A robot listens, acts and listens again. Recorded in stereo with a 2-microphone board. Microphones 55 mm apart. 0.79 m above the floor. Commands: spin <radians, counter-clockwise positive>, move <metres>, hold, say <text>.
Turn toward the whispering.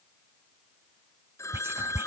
spin -0.87
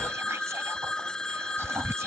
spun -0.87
spin -1.13
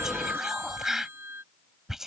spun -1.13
say Facing the whispering.